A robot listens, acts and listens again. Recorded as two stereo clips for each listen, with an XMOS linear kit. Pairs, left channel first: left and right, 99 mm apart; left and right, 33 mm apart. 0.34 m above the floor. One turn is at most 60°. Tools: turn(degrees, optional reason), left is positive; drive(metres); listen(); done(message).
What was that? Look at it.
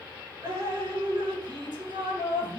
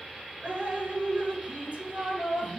turn(degrees=-50, reason="The dripping: about 50° right or 130° right.")
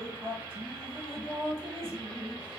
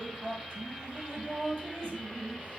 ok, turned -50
turn(degrees=-60, reason="So it is at 80° right.")
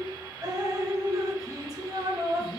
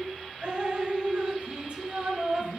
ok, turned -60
turn(degrees=-45, reason="The dripping is now 45° right.")
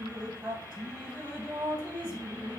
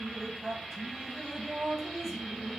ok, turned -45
turn(degrees=-10, reason="The dripping is now 10° right.")
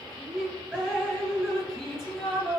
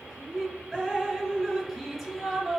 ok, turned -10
done("Found it: dripping, straight ahead.")